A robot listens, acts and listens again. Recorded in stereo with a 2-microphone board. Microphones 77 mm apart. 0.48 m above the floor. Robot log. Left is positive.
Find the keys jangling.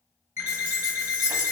cmd yaw -90
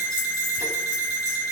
cmd idle
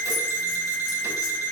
cmd idle
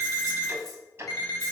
end: I heard keys jangling from this way, but can't make it out now.